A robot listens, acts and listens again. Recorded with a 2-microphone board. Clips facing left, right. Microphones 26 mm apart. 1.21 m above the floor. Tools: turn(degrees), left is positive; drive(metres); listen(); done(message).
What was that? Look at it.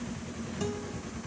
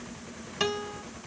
turn(degrees=-65)
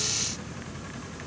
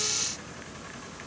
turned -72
listen()
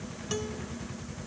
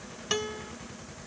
turn(degrees=-40)
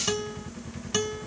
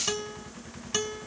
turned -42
done("Facing the guitar.")